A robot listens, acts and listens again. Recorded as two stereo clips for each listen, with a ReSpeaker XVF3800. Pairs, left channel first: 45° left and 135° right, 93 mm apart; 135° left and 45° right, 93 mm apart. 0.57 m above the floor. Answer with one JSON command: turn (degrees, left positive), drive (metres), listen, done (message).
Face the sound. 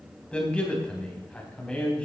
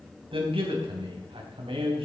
{"turn": -35}
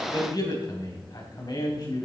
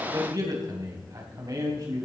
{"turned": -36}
{"done": "Found it: a man speaking, straight ahead."}